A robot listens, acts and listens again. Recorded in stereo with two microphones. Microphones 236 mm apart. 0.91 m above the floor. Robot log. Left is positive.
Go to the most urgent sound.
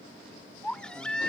cmd yaw +30
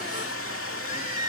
note: So it is at 145° left.
cmd yaw +145
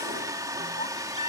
note: The baby crying is now 30° left.
cmd yaw +30
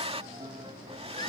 cmd idle
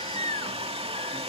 note: The baby crying is now 20° left.
cmd yaw +20
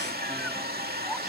cmd idle
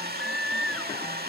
cmd fwd 1.0
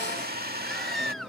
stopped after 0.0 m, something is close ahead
end: Something is in my way. I am facing the baby crying but have not reached it.